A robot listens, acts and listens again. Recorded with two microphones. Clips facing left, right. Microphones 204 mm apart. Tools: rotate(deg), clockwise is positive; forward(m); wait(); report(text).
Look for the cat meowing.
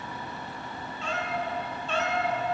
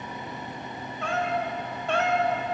rotate(60)
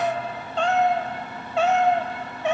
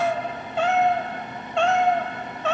rotate(-20)
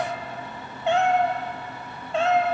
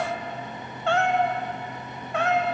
rotate(-25)
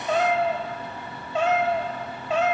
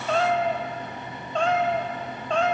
report("Found it: a cat meowing, straight ahead.")